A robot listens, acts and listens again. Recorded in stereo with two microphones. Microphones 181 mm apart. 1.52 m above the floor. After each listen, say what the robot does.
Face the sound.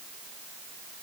Keep listening.
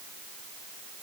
Keep listening.
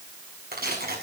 Turn 60° right.
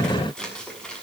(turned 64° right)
Facing the tearing paper, over 4 m away.